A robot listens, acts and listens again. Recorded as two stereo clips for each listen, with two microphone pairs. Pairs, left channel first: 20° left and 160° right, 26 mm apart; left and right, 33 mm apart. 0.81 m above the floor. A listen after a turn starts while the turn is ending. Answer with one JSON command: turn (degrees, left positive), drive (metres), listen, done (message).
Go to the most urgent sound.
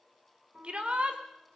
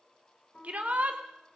{"turn": -125}
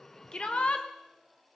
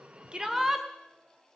{"turn": -15}
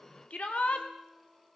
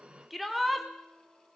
{"drive": 1.0}
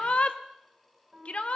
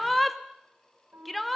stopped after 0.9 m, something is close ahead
{"done": "Arrived at the shout, straight ahead."}